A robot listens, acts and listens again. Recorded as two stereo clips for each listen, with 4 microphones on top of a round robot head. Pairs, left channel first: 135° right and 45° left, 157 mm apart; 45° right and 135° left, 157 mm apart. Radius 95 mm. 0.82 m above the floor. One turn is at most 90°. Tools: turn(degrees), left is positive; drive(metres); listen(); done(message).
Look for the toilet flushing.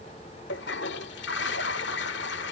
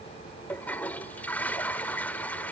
turn(degrees=-90)
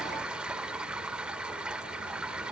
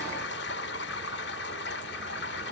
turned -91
turn(degrees=-35)
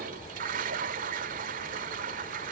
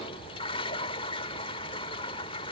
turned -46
turn(degrees=10)
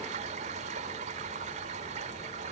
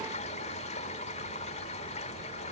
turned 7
done("Facing the toilet flushing.")